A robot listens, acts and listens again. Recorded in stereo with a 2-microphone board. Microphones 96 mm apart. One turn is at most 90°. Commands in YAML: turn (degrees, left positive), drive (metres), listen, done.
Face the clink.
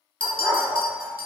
turn: 60
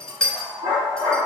done: "Found it: a clink, straight ahead, under 1 m away."